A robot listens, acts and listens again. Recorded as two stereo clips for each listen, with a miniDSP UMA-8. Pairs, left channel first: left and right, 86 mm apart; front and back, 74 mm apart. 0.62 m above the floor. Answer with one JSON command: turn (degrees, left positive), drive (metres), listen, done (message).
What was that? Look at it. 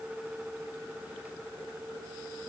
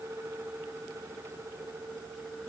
{"listen": true}
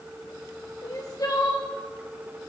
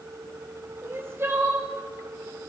{"turn": 130}
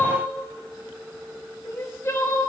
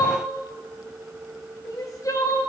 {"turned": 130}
{"turn": 35}
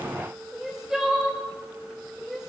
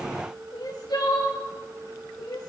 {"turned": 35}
{"done": "Found it: crying, straight ahead, 2 to 4 m away."}